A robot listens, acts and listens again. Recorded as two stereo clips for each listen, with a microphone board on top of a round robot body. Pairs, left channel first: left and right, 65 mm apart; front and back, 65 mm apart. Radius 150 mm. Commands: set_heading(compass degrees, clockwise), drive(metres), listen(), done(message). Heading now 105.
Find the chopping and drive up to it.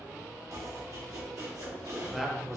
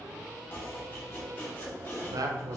set_heading(160)
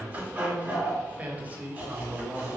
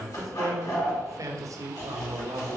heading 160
set_heading(190)
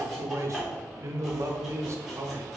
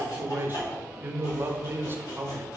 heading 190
drive(1.0)
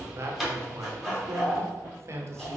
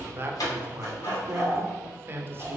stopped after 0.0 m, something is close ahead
done("Something is in my way. I am facing the chopping but have not reached it.")